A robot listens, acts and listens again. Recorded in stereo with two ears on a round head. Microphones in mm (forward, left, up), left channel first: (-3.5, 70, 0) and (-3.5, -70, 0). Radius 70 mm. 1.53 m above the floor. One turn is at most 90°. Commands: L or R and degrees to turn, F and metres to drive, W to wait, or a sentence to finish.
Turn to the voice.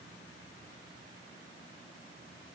W
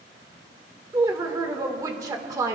R25
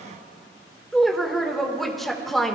Facing the woman speaking, 1 to 2 m away.